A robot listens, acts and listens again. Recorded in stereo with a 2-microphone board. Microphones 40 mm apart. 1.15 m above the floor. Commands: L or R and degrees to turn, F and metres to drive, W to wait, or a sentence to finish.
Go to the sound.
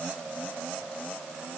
W
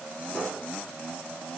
W
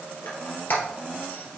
L60
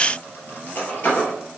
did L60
L55
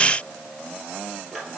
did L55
F1.0
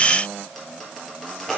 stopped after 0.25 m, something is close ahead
Something is in my way. I am facing the squeak but have not reached it.